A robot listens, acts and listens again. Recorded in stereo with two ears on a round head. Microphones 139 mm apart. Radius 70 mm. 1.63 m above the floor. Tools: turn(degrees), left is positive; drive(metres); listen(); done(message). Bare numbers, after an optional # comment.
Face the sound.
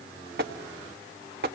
# The tapping: about 65° right or 115° right.
turn(-65)
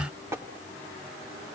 # So it is at 20° right.
turn(-20)
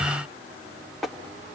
done("Facing the tapping.")